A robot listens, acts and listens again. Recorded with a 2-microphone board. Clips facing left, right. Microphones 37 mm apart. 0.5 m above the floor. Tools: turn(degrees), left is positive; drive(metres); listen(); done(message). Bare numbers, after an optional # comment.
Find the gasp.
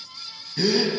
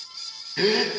# The gasp: about 35° right or 145° right.
turn(-35)
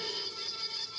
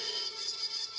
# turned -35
listen()
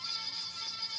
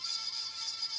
done("I heard a gasp, but can't make it out now. It was about straight ahead or 110° right.")